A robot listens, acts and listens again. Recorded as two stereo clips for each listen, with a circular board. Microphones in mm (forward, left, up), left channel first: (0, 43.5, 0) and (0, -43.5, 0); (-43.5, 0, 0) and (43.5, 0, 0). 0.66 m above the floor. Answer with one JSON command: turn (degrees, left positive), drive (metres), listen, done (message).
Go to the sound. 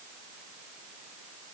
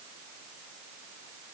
{"listen": true}
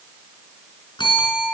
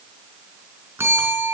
{"turn": 60}
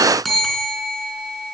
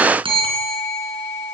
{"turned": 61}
{"drive": 1.0}
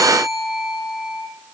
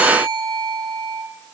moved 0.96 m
{"drive": 1.0}
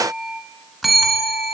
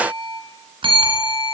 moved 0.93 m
{"drive": 1.0}
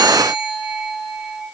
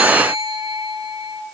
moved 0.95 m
{"turn": -10}
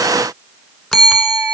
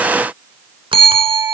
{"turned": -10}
{"drive": 1.0}
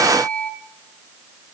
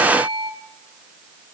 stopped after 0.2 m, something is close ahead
{"turn": 10}
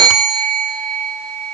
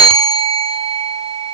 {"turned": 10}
{"done": "Arrived at the bell, straight ahead."}